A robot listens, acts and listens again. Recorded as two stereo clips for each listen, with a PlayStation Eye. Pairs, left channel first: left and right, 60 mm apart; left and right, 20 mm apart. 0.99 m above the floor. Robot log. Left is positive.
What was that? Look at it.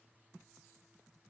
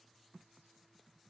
cmd idle
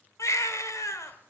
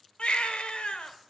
note: The baby crying: about 55° left or 125° left.
cmd yaw +55
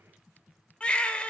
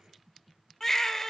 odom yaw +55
note: So it is at 20° left.
cmd yaw +20
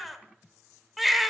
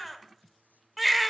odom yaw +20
end: Facing the baby crying, 1 to 2 m away.